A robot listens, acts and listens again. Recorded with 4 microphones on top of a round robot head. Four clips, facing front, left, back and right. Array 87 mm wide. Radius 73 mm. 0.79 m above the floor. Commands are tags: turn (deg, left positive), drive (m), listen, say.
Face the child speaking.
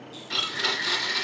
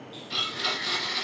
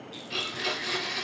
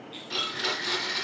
<listen/>
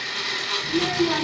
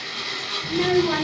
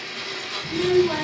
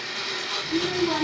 <turn deg="80"/>
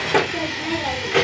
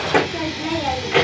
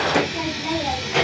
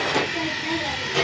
<turn deg="60"/>
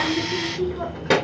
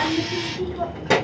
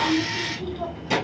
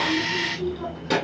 <turn deg="30"/>
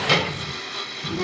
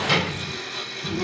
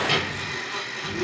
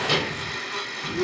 <say>Facing the child speaking.</say>